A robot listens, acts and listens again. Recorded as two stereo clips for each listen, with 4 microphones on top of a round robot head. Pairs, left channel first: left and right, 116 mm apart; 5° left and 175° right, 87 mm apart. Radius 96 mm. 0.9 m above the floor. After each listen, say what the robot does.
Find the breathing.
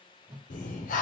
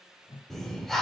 Turn 90° left.
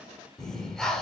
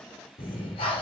Facing the breathing, under 1 m away.